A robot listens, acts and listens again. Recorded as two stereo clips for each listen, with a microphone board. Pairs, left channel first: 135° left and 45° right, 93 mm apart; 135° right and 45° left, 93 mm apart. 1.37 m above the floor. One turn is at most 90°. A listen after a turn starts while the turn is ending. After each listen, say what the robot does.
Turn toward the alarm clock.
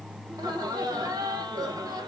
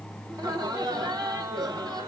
Keep listening.
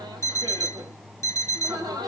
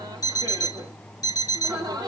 Turn 90° right.
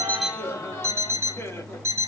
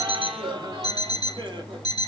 Turn 90° right.
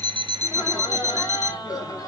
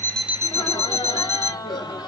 Turn 10° left.
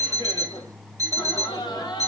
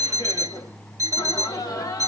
Facing the alarm clock, under 1 m away.